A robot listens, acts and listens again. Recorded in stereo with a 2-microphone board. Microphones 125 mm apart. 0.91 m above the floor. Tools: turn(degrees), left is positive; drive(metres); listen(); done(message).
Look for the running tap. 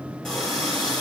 turn(degrees=30)
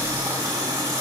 turn(degrees=-30)
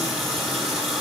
done("Found it: a running tap, straight ahead, 1 to 2 m away.")